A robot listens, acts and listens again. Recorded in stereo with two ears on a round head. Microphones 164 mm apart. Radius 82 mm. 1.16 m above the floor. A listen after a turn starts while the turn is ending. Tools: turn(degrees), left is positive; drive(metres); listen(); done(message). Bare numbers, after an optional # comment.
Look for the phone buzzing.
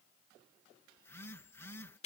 turn(30)
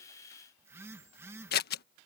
# So it is at 15° right.
turn(-15)
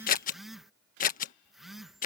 done("Facing the phone buzzing.")